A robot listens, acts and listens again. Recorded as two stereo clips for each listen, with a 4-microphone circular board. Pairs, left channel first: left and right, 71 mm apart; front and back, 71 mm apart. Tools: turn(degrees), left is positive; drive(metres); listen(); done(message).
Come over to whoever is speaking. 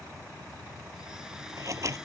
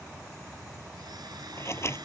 listen()
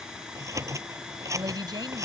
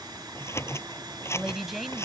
turn(degrees=-95)
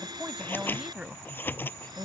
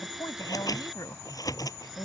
turn(degrees=-15)
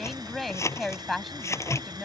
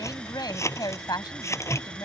drive(metres=1.0)
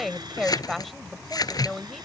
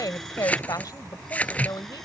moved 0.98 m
drive(metres=1.0)
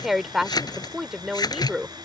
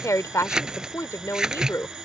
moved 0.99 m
drive(metres=1.0)
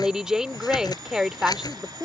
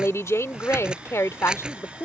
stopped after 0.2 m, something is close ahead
turn(degrees=-10)
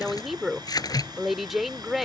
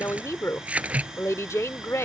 done("I am next to the woman speaking.")